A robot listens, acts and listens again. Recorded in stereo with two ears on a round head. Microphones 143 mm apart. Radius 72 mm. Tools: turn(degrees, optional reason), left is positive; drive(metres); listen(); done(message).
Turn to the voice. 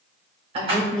turn(degrees=-40, reason="The woman speaking: about 40° right or 140° right.")
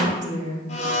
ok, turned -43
turn(degrees=-100, reason="So it is at 100° right.")
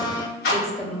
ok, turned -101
done("Found it: a woman speaking, straight ahead.")